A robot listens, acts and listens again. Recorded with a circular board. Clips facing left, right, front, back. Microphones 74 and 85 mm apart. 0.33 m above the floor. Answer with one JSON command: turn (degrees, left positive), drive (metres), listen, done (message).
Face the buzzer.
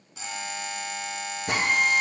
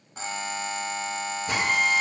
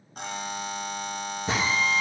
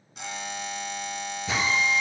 {"turn": -45}
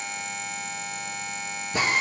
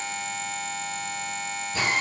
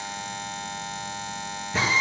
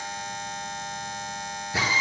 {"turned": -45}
{"done": "Found it: a buzzer, straight ahead."}